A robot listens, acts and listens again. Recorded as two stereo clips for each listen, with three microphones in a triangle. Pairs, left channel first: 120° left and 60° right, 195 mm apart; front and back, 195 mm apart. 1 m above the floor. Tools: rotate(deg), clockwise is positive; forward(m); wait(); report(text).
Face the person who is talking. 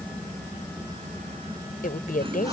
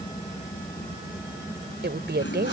rotate(-160)
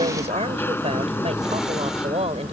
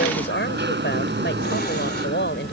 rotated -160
report("Found it: a woman speaking, straight ahead.")